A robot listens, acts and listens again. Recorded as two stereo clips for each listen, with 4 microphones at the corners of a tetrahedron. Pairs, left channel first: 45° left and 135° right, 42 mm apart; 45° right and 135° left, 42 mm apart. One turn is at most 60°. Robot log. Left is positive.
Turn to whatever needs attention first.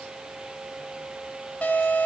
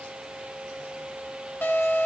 note: The alarm: 10° right.
cmd yaw -10
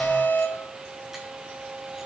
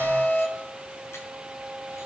end: Found it: an alarm, straight ahead, over 4 m away.